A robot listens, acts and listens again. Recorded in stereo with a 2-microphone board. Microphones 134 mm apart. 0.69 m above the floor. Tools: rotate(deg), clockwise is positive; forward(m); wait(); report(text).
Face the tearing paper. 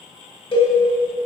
wait()
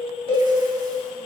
wait()
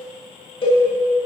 report("I can't make out tearing paper to turn to.")